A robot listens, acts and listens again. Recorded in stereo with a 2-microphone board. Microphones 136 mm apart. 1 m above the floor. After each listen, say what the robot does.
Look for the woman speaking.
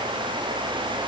Keep listening.
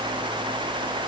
Keep listening.
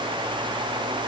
I can't make out a woman speaking to turn to.